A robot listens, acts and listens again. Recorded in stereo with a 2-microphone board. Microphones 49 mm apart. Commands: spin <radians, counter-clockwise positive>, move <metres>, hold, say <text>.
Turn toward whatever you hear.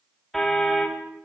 spin 0.52
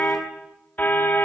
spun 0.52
spin 2.53
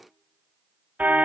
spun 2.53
spin -0.61
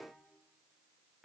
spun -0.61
hold
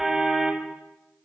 say Found it: a car horn, straight ahead, 2 to 4 m away.